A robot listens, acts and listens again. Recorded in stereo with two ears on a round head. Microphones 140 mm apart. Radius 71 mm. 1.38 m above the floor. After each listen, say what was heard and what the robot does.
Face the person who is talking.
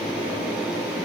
Keep listening.
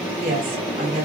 The woman speaking: about 60° right or 120° right. Turn 60° right.
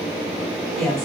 Found it: a woman speaking, straight ahead, 2 to 4 m away.